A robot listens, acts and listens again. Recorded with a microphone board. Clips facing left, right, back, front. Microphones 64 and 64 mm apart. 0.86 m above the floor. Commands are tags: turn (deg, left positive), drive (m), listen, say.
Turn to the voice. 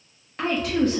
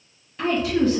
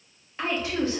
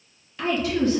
<turn deg="120"/>
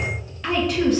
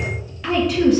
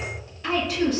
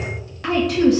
<say>Found it: a woman speaking, straight ahead.</say>